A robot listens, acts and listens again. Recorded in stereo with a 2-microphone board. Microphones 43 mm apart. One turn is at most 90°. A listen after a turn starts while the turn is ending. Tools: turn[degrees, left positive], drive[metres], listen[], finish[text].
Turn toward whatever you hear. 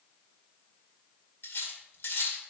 Thought: The cutlery clinking: about 65° left or 115° left.
Action: turn[65]
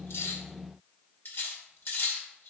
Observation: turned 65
Thought: So it is at 55° left.
Action: turn[55]
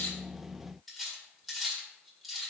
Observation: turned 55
Action: finish[Facing the cutlery clinking, 1 to 2 m away.]